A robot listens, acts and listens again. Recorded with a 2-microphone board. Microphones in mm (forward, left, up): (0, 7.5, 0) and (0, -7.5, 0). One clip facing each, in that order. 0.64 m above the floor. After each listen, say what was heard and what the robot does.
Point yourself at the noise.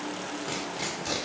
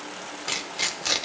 The tearing paper: about 40° right or 140° right. Turn 40° right.
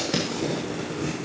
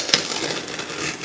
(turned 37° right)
So it is at 100° right. Turn 100° right.
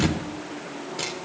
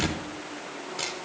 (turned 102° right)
Found it: tearing paper, straight ahead.